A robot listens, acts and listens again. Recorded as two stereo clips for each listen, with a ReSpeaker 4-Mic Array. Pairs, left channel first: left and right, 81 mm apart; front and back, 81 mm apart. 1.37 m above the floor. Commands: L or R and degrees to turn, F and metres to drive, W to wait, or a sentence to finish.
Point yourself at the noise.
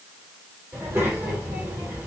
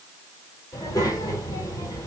R35
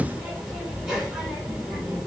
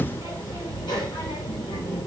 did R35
Facing the child speaking.